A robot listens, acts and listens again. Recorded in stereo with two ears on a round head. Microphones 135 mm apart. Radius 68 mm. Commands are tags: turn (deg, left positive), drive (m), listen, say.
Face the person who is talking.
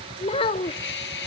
<turn deg="40"/>
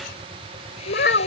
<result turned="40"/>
<turn deg="105"/>
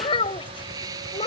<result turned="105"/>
<turn deg="35"/>
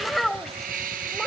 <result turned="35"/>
<say>Found it: a child speaking, straight ahead.</say>